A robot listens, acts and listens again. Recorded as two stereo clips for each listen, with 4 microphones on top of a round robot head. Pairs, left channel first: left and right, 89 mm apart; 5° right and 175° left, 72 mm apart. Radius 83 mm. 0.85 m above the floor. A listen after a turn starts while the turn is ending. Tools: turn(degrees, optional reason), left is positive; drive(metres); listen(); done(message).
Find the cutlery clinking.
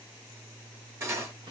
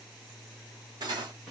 turn(degrees=-155, reason="The cutlery clinking: 155° right.")
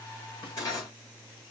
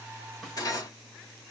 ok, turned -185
turn(degrees=30, reason="The cutlery clinking is now 30° left.")
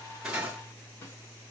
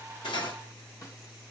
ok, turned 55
turn(degrees=-25, reason="Nothing new. It was at 25° right.")
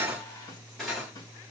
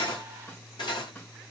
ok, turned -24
done("Facing the cutlery clinking, 1 to 2 m away.")